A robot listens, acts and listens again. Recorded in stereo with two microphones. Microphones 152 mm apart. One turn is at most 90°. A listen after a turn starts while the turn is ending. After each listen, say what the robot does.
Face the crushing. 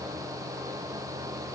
Keep listening.
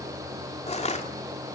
Turn 45° left.
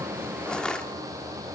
Found it: crushing, straight ahead, 2 to 4 m away.